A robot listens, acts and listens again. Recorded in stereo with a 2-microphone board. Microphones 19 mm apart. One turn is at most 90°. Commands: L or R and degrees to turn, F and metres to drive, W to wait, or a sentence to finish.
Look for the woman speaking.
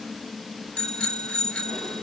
W
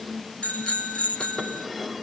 W
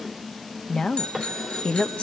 L60
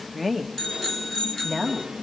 R15
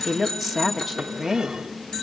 Found it: a woman speaking, straight ahead.